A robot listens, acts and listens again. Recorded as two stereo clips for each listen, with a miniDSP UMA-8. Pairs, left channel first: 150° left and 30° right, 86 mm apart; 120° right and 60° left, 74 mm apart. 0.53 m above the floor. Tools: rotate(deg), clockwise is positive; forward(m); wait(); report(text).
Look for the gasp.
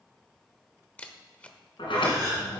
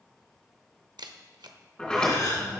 rotate(85)
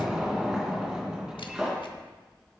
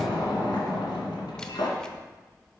report("I heard a gasp from this way, but can't make it out now.")